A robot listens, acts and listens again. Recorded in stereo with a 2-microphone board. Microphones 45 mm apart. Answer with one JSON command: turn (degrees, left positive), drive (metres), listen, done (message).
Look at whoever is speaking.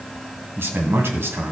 {"turn": -60}
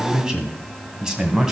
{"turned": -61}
{"turn": -15}
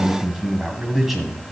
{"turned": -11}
{"done": "Found it: a man speaking, straight ahead, 2 to 4 m away."}